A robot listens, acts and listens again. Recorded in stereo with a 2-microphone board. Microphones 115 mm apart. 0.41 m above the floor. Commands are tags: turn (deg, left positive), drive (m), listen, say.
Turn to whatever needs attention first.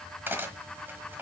<listen/>
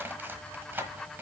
<listen/>
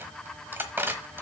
<say>I can't make out anything urgent, only cutlery clinking.</say>